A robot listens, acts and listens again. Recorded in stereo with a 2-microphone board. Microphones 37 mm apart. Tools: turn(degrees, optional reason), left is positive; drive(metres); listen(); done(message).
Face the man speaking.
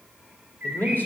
turn(degrees=60, reason="The man speaking: about 60° left or 120° left.")
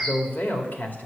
turn(degrees=60, reason="So it is at 60° left.")
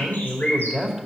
done("Found it: a man speaking, straight ahead.")